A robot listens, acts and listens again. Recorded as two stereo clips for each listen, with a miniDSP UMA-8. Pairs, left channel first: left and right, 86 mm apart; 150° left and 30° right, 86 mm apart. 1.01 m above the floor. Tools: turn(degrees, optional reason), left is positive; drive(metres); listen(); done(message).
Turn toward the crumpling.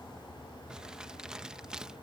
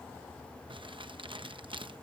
turn(degrees=-10, reason="The crumpling: 10° right.")
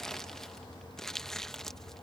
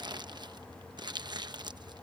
done("Found it: crumpling, straight ahead.")